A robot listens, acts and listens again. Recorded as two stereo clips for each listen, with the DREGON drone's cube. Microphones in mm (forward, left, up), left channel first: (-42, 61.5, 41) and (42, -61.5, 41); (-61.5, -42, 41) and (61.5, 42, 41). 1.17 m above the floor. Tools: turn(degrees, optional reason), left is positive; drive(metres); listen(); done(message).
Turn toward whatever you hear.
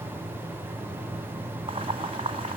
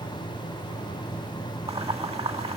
turn(degrees=-10, reason="The boiling: 10° right.")
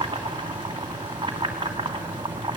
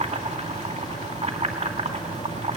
done("Facing the boiling, 2 to 4 m away.")